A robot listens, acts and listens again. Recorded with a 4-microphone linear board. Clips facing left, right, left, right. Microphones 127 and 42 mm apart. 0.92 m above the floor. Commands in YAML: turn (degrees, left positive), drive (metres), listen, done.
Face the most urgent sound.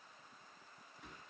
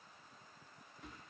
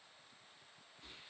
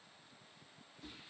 listen: true
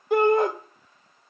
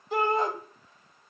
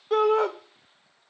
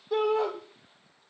turn: 60
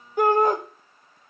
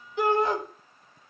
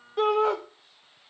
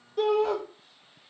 turn: 50
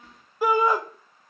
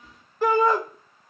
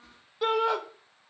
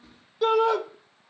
turn: 10
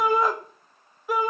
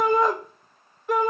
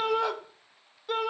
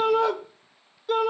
done: "Facing the shout, 1 to 2 m away."